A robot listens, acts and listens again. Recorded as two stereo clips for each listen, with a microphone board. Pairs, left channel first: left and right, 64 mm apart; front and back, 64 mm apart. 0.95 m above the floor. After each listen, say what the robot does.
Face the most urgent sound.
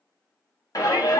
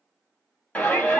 Turn 65° left.
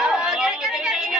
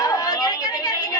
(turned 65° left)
Turn 10° right.
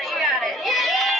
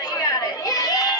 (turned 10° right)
Facing the shout.